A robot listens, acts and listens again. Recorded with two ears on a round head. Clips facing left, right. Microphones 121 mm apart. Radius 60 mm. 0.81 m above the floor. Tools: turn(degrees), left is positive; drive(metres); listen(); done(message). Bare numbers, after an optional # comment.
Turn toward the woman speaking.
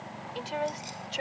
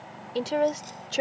# The woman speaking: about 60° right or 120° right.
turn(-60)
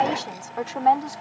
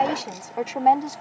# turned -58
# So it is at 20° right.
turn(-20)
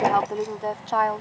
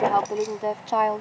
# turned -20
# The woman speaking is now 25° right.
turn(-25)
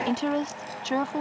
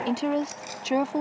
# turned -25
# The woman speaking is now 20° right.
turn(-20)
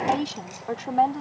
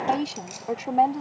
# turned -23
# The woman speaking is now 15° right.
turn(-15)
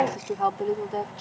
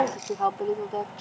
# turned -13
done("Found it: a woman speaking, straight ahead.")